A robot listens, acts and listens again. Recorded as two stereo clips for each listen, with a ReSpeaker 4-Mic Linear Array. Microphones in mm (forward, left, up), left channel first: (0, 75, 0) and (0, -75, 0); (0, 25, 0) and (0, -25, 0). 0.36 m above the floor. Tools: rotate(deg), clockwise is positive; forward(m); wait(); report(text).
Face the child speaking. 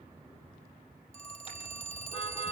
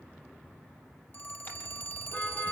wait()
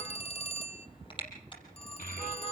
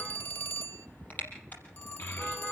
rotate(-65)
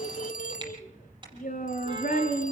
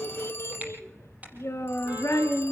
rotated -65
rotate(-60)
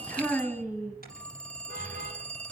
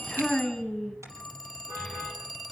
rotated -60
report("Found it: a child speaking, straight ahead, 2 to 4 m away.")